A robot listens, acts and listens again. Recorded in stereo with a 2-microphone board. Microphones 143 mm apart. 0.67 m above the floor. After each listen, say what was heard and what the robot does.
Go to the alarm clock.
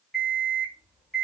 Turn 30° left.
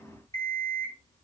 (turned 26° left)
So it is at 155° left. Turn 155° left.
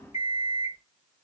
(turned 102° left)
The alarm clock is now 50° left. Turn 50° left.
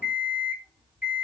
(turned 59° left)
Drive 1.0 m forward.
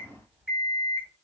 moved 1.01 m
The alarm clock is now 10° right. Turn 10° right.
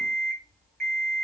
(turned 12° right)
Drive 1.0 m forward.
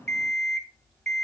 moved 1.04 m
Drive 1.0 m forward.
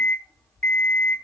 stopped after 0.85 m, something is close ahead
Arrived at the alarm clock, straight ahead.